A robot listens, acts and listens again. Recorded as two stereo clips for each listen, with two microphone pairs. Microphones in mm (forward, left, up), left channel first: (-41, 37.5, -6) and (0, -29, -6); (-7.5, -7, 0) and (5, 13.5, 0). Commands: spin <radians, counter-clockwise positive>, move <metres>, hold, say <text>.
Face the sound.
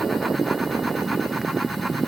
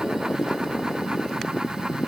hold
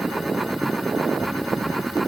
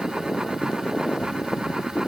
hold
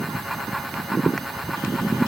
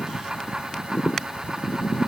say I can't make out anything to turn to.